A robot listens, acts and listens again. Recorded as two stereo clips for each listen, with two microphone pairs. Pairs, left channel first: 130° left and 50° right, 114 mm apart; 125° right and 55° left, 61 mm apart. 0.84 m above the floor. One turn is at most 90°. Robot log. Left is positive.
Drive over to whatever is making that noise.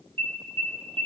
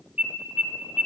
note: The alarm: 15° right.
cmd yaw -15
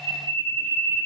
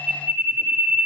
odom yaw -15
cmd fwd 1.0
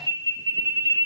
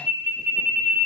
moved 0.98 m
cmd fwd 1.0
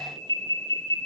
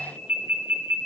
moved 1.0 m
note: The alarm is now 10° right.
cmd yaw -10
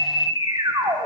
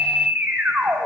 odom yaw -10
cmd fwd 1.0
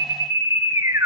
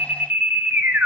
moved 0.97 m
cmd fwd 1.0
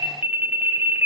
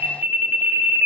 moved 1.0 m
note: The alarm is now 15° left.
cmd yaw +15
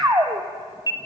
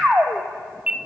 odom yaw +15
cmd fwd 1.0
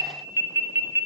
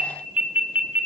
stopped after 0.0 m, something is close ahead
end: Arrived at the alarm, straight ahead.